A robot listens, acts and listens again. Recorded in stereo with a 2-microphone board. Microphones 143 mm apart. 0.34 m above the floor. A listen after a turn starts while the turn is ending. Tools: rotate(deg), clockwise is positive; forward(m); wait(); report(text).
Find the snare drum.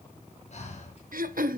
wait()
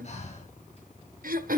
wait()
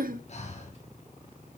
report("I can't make out a snare drum, only breathing and throat clearing.")